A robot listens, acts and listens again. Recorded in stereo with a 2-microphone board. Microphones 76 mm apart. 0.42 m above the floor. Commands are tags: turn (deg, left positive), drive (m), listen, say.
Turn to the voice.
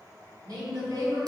<turn deg="-55"/>
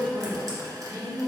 <turn deg="-15"/>
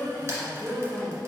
<say>Found it: a woman speaking, straight ahead.</say>